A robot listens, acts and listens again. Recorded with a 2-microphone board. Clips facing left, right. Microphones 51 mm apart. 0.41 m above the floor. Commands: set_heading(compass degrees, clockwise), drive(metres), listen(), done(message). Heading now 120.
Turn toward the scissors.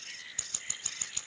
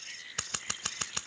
set_heading(210)
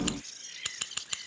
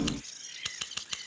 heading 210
done("Found it: scissors, straight ahead.")